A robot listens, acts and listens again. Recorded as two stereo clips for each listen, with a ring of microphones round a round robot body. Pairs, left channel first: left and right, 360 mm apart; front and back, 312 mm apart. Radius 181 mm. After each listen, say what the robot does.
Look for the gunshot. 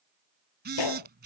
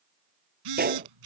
Turn 120° left.
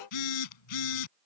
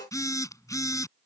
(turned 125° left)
Facing where the gunshot came from. I can't hear it now.